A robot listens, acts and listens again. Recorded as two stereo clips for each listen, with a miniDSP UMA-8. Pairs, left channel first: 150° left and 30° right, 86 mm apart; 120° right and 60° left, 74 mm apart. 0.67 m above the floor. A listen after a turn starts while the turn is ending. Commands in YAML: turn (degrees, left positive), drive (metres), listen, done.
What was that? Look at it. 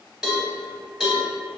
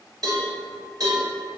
turn: 50
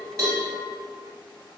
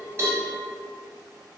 listen: true
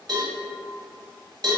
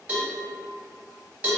turn: -10
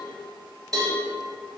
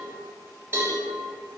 done: "Facing the cowbell."